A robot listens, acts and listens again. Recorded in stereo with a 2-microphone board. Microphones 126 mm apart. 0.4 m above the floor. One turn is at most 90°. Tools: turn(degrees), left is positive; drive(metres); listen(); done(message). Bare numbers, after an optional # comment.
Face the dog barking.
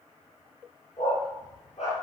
# The dog barking: about 70° left or 110° left.
turn(70)
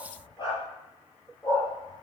# So it is at 30° left.
turn(30)
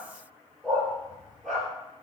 done("Facing the dog barking, 2 to 4 m away.")